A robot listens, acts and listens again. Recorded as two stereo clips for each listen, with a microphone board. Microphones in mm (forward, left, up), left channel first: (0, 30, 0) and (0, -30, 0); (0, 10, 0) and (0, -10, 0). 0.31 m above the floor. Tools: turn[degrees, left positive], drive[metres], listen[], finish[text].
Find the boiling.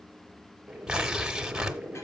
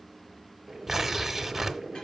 Thought: The boiling: about 20° right or 160° right.
Action: turn[-20]
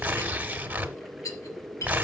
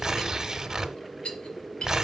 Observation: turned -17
Action: finish[Found it: boiling, straight ahead, 1 to 2 m away.]